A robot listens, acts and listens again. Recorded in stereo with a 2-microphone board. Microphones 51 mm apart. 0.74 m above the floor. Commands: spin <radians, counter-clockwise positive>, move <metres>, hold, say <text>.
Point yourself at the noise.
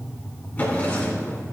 spin 0.61
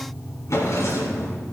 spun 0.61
spin 1.92
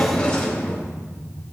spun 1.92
spin 0.26
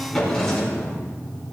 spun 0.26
say Facing the drawer.